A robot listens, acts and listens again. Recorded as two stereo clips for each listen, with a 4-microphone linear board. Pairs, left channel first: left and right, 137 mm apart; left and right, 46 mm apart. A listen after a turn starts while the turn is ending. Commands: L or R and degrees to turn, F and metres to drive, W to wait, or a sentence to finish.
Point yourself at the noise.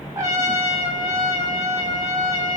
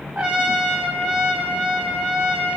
R30
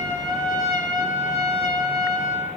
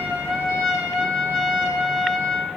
Facing the trumpet.